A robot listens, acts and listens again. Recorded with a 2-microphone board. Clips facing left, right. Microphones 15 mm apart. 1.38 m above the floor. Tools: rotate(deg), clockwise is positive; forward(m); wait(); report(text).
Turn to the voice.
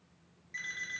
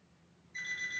wait()
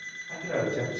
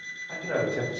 rotate(15)
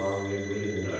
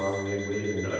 rotate(150)
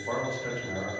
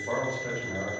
report("Found it: a man speaking, straight ahead.")